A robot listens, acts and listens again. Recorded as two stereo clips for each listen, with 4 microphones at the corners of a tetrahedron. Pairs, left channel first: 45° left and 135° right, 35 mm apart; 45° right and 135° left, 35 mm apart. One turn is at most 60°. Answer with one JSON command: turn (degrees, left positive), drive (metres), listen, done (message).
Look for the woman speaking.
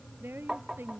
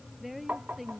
{"turn": -60}
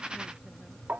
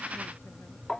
{"turn": -60}
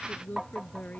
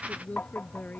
{"done": "Facing the woman speaking."}